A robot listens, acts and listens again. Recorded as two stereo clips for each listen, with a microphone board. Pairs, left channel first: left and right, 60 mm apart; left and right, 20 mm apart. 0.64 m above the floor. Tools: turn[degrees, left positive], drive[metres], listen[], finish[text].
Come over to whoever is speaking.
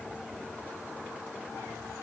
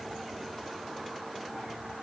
Action: listen[]
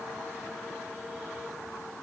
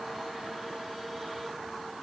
Action: listen[]
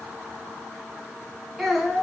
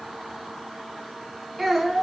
Action: turn[-30]
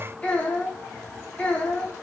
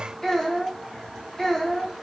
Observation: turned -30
Thought: So it is at 25° left.
Action: turn[25]
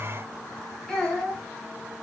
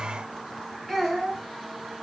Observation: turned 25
Action: drive[1.0]
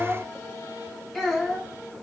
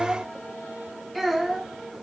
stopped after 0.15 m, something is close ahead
Action: finish[Something is in my way. I am facing the child speaking but have not reached it.]